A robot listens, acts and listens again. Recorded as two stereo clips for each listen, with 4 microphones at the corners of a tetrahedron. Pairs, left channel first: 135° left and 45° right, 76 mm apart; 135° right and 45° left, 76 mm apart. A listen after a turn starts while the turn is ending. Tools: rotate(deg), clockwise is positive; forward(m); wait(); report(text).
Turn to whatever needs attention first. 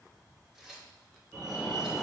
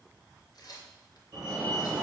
rotate(-60)
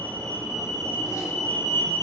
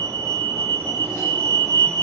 report("Facing the fire alarm.")